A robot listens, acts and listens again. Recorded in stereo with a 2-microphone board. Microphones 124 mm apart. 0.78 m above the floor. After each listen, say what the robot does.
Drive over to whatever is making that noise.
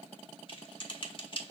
Turn 45° left.
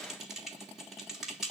Drive 1.0 m forward.
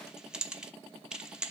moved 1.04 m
Drive 1.0 m forward.
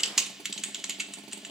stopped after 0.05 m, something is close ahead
I am next to the typing on a keyboard.